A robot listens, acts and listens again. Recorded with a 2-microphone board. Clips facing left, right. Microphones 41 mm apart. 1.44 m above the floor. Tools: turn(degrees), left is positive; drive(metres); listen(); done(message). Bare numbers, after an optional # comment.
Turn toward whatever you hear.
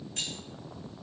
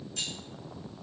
# The keys jangling: about 40° left or 140° left.
turn(40)
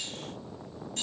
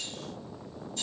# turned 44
listen()
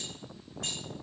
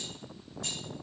# So it is at 100° left.
turn(100)
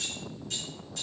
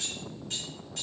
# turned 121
# The keys jangling is now 25° right.
turn(-25)
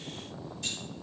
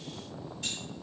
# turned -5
# Nothing new. It was at 20° right.
turn(-20)
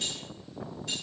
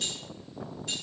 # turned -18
done("Found it: keys jangling, straight ahead.")